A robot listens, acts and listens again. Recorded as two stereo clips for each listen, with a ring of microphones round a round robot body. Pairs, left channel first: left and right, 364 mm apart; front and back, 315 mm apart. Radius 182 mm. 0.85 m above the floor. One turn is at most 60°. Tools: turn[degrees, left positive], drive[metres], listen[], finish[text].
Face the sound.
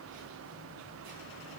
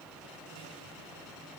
Action: listen[]
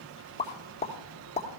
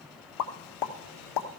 Thought: The pop: 15° left.
Action: turn[15]
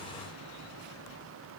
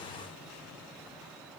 Action: finish[I heard a pop from this way, but can't make it out now.]